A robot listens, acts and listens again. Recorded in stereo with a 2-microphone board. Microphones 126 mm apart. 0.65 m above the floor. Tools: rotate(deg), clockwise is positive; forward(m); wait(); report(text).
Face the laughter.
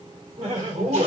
rotate(70)
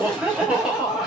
report("Found it: laughter, straight ahead, 1 to 2 m away.")